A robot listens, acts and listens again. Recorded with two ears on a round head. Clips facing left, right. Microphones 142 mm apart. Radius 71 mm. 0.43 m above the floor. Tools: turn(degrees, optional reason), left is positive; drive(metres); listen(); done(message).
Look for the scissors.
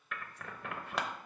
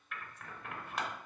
turn(degrees=60, reason="The scissors: about 60° left or 120° left.")
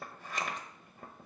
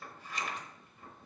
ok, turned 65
turn(degrees=45, reason="So it is at 45° left.")
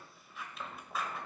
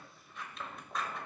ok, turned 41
done("Found it: scissors, straight ahead, under 1 m away.")